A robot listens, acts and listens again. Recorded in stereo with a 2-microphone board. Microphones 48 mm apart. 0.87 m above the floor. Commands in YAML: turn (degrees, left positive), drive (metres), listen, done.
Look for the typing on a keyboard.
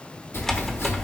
turn: 30
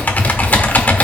turn: 145
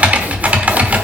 turn: -30
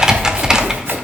turn: -15
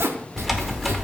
done: "Found it: typing on a keyboard, straight ahead."